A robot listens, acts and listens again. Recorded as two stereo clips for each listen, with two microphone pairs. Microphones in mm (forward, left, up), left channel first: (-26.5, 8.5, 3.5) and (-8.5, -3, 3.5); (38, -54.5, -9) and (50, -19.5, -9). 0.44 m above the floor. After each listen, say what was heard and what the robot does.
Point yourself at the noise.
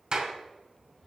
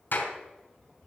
The clap: 80° right. Turn 80° right.
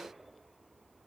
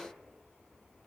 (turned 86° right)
Keep listening.
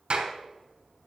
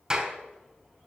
Facing the clap.